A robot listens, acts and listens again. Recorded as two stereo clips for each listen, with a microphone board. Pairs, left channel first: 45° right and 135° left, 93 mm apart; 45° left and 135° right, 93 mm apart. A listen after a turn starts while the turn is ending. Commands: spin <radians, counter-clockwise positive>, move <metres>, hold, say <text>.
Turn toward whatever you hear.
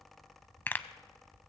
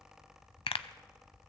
spin 0.44
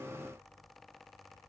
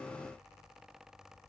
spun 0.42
say I heard a pop from this way, but can't make it out now.